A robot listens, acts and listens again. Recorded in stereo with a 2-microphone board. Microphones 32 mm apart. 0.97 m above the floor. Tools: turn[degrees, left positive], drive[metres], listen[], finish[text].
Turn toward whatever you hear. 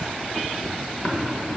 Thought: The tapping: about 60° left or 120° left.
Action: turn[60]
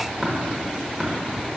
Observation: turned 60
Action: finish[Facing the tapping, 1 to 2 m away.]